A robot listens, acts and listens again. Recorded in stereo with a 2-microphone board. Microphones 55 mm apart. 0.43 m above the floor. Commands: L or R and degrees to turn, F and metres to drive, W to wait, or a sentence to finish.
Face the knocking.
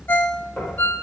L35
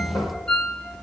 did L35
L110
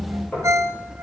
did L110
L25
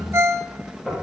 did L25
R15
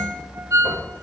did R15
W
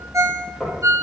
Facing the knocking, over 4 m away.